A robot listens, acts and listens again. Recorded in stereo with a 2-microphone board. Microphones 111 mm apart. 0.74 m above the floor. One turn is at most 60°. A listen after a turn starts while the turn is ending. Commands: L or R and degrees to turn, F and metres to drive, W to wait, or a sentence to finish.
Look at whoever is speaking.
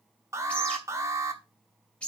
W
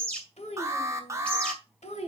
L60
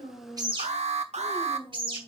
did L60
L50
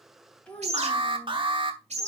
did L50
L10
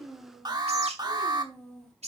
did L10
Facing the child speaking, 2 to 4 m away.